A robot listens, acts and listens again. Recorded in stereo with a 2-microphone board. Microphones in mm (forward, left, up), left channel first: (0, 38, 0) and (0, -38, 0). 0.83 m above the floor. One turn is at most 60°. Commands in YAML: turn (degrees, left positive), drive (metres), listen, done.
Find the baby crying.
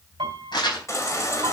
turn: 40
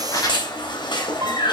turn: 60
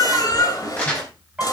turn: 55
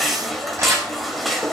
done: "Facing the baby crying, 2 to 4 m away."